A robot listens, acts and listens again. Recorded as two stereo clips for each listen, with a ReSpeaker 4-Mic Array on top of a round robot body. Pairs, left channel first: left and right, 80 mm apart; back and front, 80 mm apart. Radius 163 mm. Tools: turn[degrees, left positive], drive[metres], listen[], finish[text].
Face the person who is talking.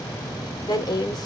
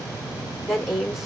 Thought: The woman speaking: 90° left.
Action: turn[90]
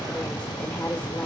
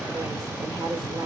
Thought: The woman speaking is now 25° left.
Action: turn[25]
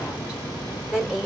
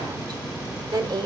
Thought: The woman speaking is now 10° right.
Action: turn[-10]
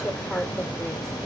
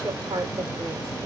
Action: finish[Facing the woman speaking, 1 to 2 m away.]